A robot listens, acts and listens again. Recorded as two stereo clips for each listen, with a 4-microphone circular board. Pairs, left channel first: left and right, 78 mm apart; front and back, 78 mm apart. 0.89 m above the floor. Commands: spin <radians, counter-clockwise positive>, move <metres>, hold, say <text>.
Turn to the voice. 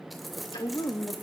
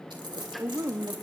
spin 2.18
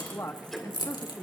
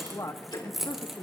spin 0.70
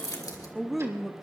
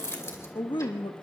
say Facing the woman speaking.